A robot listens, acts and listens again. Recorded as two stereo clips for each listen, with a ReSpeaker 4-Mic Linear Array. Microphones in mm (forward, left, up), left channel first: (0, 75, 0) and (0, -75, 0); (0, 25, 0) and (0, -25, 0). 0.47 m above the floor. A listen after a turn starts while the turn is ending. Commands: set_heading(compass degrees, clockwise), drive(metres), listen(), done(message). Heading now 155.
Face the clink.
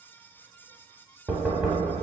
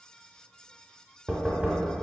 listen()
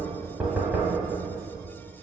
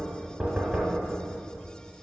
listen()
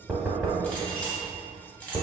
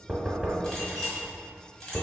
set_heading(125)
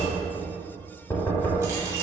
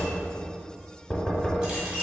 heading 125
listen()
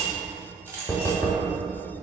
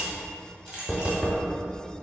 set_heading(145)
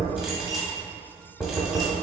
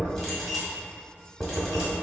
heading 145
listen()
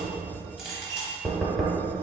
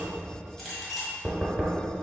done("Found it: a clink, straight ahead, 1 to 2 m away.")